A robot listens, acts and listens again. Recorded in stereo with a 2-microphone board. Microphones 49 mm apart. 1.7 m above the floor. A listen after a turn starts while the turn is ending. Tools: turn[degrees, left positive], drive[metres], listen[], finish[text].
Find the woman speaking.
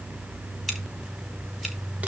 Action: listen[]
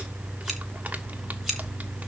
Action: listen[]
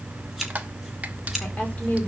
Thought: The woman speaking: about 30° left or 150° left.
Action: turn[30]
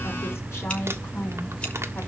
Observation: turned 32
Thought: So it is at 120° left.
Action: turn[120]
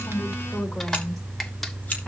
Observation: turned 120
Action: listen[]
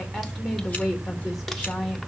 Action: finish[Found it: a woman speaking, straight ahead.]